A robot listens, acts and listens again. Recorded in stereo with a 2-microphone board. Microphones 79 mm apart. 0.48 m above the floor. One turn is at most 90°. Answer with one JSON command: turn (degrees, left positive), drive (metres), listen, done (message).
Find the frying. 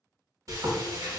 {"turn": -45}
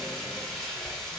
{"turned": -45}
{"done": "Facing the frying, 1 to 2 m away."}